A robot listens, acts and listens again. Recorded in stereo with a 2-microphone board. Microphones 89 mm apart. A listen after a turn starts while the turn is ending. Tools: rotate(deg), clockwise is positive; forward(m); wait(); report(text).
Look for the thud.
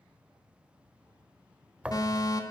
rotate(30)
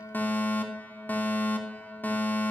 wait()
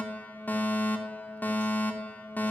report("I heard a thud, but can't make it out now. It was about 15° left or 135° right.")